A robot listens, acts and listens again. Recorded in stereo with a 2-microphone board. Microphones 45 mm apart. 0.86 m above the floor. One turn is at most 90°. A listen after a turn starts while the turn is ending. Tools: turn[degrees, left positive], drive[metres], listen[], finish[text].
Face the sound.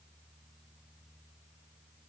Action: listen[]
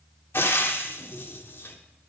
Thought: The frying: about 65° left or 115° left.
Action: turn[65]
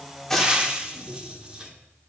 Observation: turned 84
Thought: So it is at 20° right.
Action: turn[-20]
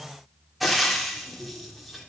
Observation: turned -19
Action: finish[Found it: frying, straight ahead, 1 to 2 m away.]